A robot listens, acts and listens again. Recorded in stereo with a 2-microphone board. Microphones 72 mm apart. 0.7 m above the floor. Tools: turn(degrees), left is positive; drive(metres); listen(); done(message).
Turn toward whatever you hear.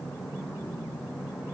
listen()
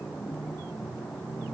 listen()
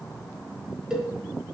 turn(degrees=-30)
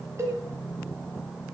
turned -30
turn(degrees=-140)
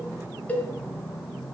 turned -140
turn(degrees=20)
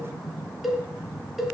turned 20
done("Facing the cowbell.")